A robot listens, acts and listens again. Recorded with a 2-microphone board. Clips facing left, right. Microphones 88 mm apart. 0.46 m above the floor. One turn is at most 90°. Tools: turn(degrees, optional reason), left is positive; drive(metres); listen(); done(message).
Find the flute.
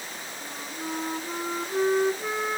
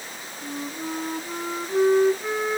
turn(degrees=30)
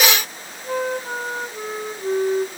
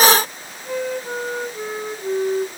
turn(degrees=90, reason="So it is at 145° left.")
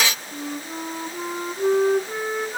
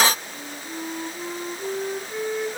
turn(degrees=85, reason="The flute is now 85° left.")
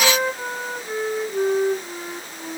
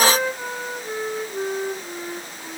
done("Facing the flute, 2 to 4 m away.")